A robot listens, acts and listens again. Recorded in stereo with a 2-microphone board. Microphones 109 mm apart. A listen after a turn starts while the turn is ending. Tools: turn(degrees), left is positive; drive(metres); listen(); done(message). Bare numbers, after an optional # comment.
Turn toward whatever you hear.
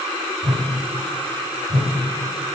# The whoosh: about 65° right or 115° right.
turn(-65)
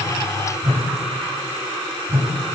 # So it is at 40° right.
turn(-40)
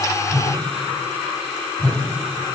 # The whoosh is now 10° left.
turn(10)
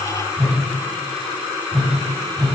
done("Facing the whoosh, 1 to 2 m away.")